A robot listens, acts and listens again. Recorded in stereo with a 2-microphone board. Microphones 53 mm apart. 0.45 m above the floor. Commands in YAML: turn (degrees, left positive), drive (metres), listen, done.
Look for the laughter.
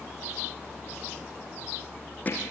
listen: true
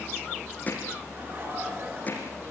turn: -50
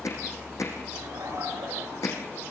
turn: -75
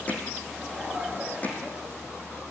turn: -10
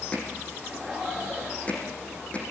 done: "Found it: laughter, straight ahead."